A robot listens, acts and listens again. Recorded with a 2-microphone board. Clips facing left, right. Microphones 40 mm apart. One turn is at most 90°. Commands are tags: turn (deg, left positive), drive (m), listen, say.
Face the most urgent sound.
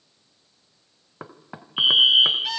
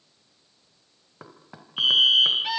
<turn deg="20"/>
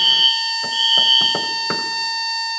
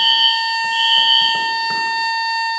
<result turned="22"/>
<say>Facing the fire alarm, 2 to 4 m away.</say>